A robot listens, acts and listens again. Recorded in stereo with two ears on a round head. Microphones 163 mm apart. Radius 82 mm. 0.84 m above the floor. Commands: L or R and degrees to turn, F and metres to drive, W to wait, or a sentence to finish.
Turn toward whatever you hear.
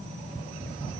W
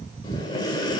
L25
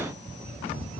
W
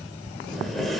Facing the breathing, 1 to 2 m away.